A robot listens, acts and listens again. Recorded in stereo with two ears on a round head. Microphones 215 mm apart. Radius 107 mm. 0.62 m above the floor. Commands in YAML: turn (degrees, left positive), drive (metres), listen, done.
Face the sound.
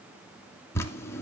turn: 30
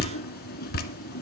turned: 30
turn: 135
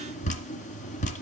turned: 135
turn: 30
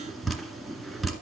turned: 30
done: "Facing the dripping."